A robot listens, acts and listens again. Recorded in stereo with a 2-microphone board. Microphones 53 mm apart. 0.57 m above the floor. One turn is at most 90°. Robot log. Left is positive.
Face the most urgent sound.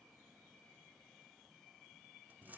cmd idle
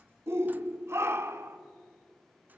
note: The shout: about 55° right or 125° right.
cmd yaw -55
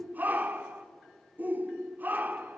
note: So it is at 45° right.
cmd yaw -45
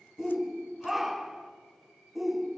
end: Found it: a shout, straight ahead.